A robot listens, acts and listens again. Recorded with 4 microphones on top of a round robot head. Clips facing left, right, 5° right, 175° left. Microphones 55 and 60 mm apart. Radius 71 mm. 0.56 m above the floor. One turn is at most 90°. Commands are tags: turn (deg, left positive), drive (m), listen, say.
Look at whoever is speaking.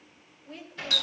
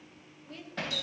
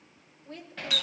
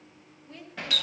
<turn deg="15"/>
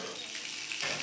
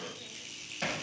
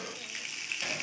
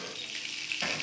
<listen/>
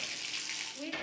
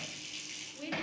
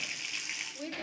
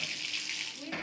<say>Facing the woman speaking, 2 to 4 m away.</say>